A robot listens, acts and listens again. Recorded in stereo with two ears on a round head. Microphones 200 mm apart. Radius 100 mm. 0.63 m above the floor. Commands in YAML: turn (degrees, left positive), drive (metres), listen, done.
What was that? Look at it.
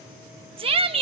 turn: -25
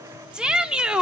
done: "Facing the shout."